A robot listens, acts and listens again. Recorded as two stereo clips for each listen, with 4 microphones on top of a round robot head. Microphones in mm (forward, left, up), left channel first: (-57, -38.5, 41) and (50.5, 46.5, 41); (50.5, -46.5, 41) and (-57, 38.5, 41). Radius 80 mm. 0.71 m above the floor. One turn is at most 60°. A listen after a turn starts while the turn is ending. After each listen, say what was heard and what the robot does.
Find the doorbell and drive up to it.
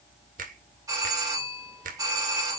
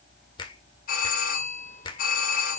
The doorbell: 25° right. Turn 25° right.
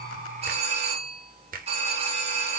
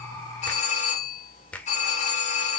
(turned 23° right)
Drive 1.0 m forward.
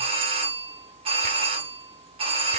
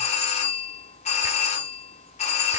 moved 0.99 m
Drive 1.0 m forward.
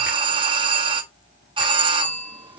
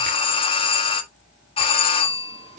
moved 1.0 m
Drive 1.0 m forward.
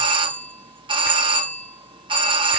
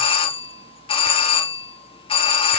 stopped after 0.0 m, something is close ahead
Arrived at the doorbell, straight ahead.